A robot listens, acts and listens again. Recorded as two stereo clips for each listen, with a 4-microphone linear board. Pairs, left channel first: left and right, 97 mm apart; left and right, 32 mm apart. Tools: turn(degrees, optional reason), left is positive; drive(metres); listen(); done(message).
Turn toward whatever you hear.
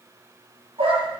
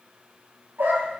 turn(degrees=-70, reason="The dog barking: about 70° right or 110° right.")
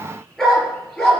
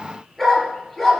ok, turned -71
done("Found it: a dog barking, straight ahead.")